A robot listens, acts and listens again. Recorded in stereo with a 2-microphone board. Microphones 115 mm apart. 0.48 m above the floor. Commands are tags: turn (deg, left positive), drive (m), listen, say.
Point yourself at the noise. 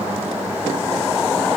<listen/>
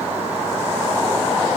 <listen/>
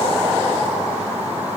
<say>I can't make out anything to turn to.</say>